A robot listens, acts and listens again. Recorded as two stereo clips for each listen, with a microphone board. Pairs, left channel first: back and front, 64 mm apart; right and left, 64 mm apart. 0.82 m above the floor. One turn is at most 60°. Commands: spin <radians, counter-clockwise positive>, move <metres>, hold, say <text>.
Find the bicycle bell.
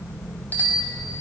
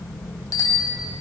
spin -1.05
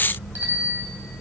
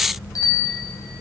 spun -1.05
spin -1.05
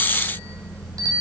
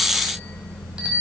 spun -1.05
spin 0.26
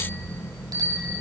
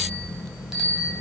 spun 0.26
say Facing the bicycle bell.